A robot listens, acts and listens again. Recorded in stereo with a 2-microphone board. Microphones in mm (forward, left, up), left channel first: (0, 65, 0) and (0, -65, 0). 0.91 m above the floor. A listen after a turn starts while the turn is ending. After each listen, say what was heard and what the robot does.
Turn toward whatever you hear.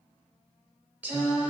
Turn 30° right.
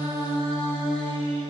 So it is at 135° right. Turn 135° right.
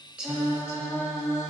The singing is now 20° left. Turn 20° left.
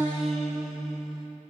Found it: singing, straight ahead, 1 to 2 m away.